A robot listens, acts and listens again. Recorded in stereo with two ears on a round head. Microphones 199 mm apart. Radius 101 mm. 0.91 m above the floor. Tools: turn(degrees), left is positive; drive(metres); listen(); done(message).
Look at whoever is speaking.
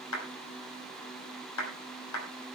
listen()
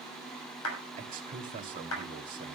turn(degrees=-40)
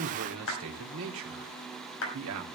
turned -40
turn(degrees=-100)
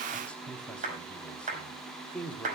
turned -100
done("Found it: a man speaking, straight ahead.")